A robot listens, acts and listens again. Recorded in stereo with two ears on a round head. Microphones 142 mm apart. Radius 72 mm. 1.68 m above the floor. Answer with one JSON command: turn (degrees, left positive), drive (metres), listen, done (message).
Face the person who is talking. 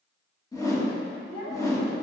{"turn": 70}
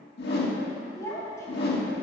{"turn": 20}
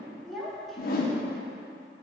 {"done": "Found it: a child speaking, straight ahead, 2 to 4 m away."}